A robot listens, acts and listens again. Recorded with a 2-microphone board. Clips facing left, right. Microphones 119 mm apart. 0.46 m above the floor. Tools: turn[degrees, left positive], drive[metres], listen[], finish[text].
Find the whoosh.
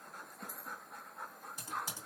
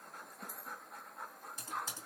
Action: listen[]
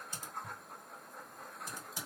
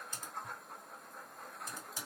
Action: listen[]
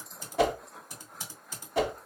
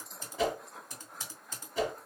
Thought: The whoosh: about 70° left or 110° left.
Action: turn[70]
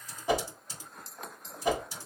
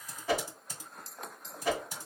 Thought: So it is at 20° left.
Action: turn[20]
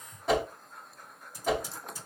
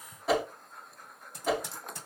Action: finish[Facing the whoosh, under 1 m away.]